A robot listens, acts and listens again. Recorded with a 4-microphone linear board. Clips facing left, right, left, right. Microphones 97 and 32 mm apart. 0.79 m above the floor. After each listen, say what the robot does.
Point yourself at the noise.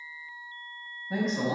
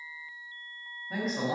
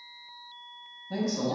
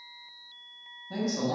Turn 30° right.
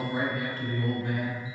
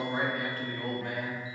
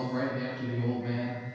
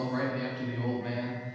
Turn 120° right.
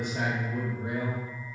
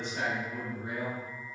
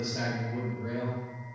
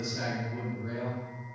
Turn 25° left.
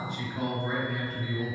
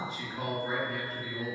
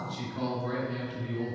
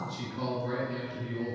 Found it: a man speaking, straight ahead.